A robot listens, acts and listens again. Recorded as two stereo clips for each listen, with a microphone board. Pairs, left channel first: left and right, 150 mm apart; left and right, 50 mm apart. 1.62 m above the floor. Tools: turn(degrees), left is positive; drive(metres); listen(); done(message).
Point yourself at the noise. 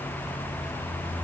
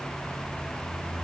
listen()
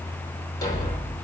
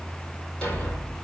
turn(degrees=25)
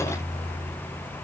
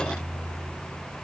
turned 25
listen()
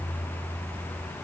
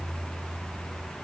done("I heard a thud, but can't make it out now. It was about straight ahead or 130° left.")